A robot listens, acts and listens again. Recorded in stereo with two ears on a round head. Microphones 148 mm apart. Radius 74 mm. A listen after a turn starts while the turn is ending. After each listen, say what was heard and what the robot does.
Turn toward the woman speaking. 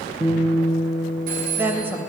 Turn 30° right.
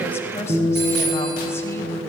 So it is at 15° left. Turn 15° left.
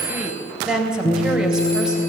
Found it: a woman speaking, straight ahead.